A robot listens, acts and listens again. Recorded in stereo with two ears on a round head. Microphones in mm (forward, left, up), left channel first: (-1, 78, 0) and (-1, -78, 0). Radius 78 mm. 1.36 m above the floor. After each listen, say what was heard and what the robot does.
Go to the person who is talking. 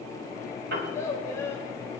The child speaking: about 15° left or 165° left. Turn 15° left.
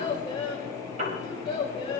So it is at 150° left. Turn 150° left.
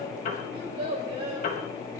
The child speaking is now 30° right. Turn 30° right.
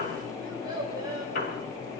The child speaking is now 25° right. Turn 25° right.
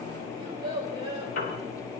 The child speaking is now 30° right. Turn 30° right.
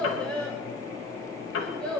Drive 1.0 m forward.
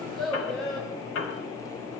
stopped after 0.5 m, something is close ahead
Something is in my way. I am facing the child speaking but have not reached it.